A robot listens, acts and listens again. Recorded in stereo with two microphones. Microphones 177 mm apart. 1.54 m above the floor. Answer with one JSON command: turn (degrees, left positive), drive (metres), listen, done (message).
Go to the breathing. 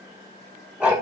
{"listen": true}
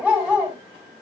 {"listen": true}
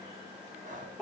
{"turn": -45}
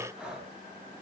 {"drive": 1.0}
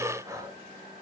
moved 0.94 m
{"turn": -20}
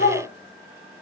{"listen": true}
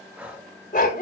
{"turn": -10}
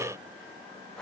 {"drive": 1.0}
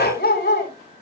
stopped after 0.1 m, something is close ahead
{"listen": true}
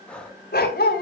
{"done": "Arrived at the breathing, straight ahead."}